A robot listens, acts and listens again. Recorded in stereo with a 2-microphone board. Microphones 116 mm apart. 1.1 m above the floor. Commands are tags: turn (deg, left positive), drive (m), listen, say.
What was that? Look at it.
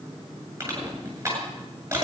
<turn deg="-25"/>
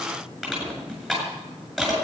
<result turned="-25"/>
<say>Facing the crushing, over 4 m away.</say>